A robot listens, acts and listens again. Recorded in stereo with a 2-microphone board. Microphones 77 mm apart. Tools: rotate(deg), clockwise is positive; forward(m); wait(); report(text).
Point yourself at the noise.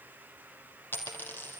rotate(-25)
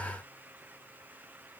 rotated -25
wait()
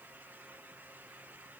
report("I heard a dropped coin, but can't make it out now. It was about straight ahead or 130° left.")